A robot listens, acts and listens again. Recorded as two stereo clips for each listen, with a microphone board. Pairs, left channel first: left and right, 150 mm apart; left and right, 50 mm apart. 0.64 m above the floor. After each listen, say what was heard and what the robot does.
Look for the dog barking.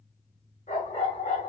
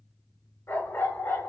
The dog barking: about 55° left or 125° left. Turn 55° left.
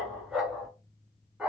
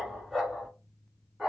Facing the dog barking, 2 to 4 m away.